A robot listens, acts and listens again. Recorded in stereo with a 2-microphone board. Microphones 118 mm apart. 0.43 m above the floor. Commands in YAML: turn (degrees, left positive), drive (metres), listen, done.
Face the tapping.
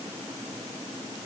listen: true
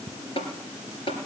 turn: 50
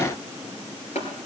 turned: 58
turn: 70
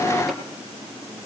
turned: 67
listen: true
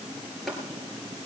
done: "Found it: tapping, straight ahead."